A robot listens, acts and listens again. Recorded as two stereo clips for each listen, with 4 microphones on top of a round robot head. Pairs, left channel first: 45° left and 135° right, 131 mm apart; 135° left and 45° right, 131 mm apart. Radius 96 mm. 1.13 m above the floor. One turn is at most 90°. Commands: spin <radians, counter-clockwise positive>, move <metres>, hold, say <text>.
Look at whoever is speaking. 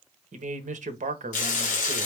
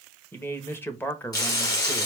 spin -1.57
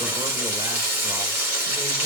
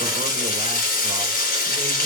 spin -1.05
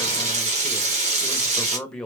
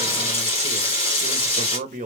spin -0.70
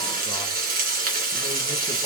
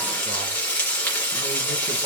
hold
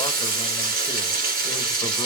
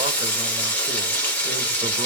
hold
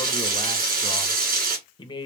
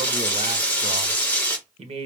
spin -0.17
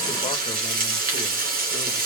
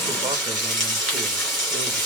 hold
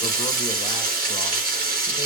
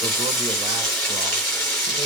hold
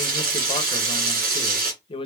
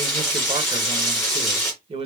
say Found it: a man speaking, straight ahead, 1 to 2 m away.